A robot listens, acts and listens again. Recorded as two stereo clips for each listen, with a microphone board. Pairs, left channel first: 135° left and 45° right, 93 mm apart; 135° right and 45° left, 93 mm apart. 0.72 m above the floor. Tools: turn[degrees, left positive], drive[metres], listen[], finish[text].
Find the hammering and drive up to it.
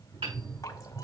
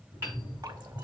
Thought: The hammering: 20° right.
Action: turn[-20]
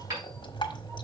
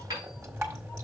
Action: drive[1.0]
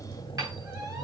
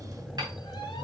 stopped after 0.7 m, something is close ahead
Action: finish[Blocked. The hammering is further on, straight ahead.]